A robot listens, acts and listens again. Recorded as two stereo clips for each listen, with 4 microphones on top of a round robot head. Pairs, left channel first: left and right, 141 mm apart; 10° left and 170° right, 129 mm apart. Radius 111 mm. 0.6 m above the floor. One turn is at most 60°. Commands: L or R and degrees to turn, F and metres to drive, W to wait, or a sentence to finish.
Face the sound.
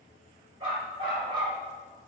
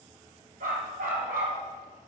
R60
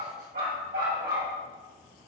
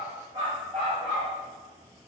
R60
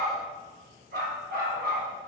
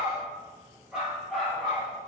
R60
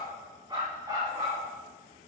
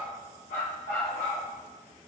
R25
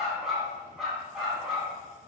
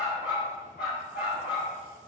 Facing the dog barking.